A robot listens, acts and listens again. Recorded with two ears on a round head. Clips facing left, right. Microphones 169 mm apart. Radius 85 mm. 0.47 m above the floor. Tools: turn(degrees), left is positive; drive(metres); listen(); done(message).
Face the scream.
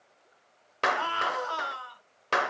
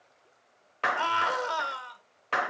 turn(degrees=-35)
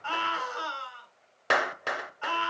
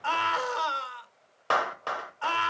turn(degrees=-105)
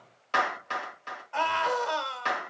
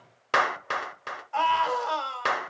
done("Facing the scream, 2 to 4 m away.")